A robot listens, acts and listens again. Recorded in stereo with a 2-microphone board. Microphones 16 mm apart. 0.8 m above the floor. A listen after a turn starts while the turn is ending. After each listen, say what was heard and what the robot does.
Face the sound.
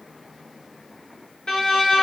The violin: about 60° left or 120° left. Turn 60° left.
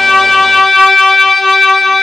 Found it: a violin, straight ahead, 2 to 4 m away.